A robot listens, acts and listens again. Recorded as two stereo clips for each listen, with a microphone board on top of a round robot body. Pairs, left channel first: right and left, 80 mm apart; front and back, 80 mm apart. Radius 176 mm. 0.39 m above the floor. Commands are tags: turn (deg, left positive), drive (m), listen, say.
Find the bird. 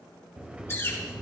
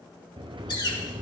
<turn deg="-30"/>
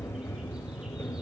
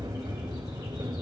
<listen/>
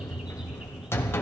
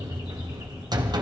<listen/>
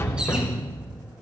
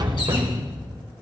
<say>I heard a bird from this way, but can't make it out now.</say>